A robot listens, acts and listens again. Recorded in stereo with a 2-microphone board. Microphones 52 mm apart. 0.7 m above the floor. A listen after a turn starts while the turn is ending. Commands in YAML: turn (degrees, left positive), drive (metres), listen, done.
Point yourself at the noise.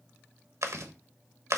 turn: -70
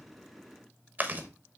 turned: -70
turn: -35
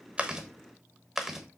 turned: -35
done: "Found it: chewing, straight ahead."